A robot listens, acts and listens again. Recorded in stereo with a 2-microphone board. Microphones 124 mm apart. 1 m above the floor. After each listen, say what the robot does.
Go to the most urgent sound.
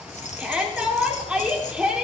Turn 30° right.
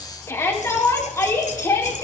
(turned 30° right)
Turn 20° left.
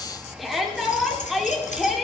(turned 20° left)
Drive 1.0 m forward.
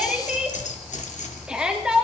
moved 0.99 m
Drive 1.0 m forward.
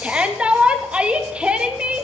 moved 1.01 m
Turn 10° right.
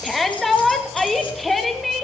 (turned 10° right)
Drive 1.0 m forward.
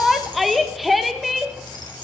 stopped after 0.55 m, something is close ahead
I am next to the shout.